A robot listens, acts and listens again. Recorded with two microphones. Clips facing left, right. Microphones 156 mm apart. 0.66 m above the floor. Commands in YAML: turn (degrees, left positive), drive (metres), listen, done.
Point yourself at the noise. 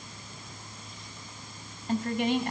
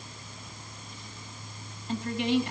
turn: 55
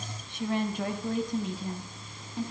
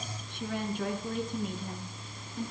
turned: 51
turn: 75
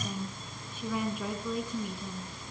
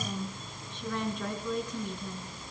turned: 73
done: "Found it: a woman speaking, straight ahead, over 4 m away."